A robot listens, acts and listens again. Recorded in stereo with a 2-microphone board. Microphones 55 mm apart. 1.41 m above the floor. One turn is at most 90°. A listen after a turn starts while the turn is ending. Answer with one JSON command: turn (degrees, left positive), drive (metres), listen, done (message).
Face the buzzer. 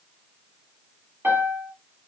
{"listen": true}
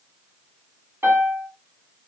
{"listen": true}
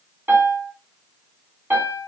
{"done": "I can't make out a buzzer to turn to."}